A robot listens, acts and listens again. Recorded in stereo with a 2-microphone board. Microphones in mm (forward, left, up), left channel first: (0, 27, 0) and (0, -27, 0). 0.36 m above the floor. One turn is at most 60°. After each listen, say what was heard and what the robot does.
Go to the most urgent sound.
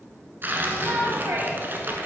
The shout: about 55° right or 125° right. Turn 55° right.
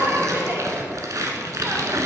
So it is at 50° right. Turn 50° right.
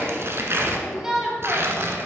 The shout is now 15° right. Turn 15° right.
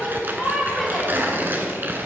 Drive 1.0 m forward.
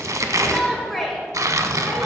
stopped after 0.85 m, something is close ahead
Arrived at the shout, straight ahead.